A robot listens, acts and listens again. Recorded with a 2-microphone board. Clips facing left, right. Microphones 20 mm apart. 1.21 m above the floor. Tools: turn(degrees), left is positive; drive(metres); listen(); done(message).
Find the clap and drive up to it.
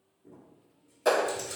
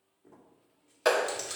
turn(degrees=-45)
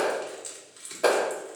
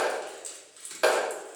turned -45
turn(degrees=-90)
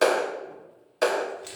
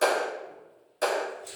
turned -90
turn(degrees=30)
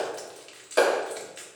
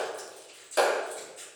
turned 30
drive(metres=1.0)
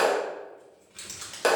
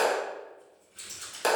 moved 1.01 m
turn(degrees=10)
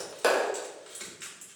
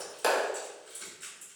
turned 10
drive(metres=1.0)
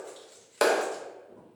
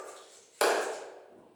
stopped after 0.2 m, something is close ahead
done("Arrived at the clap, straight ahead.")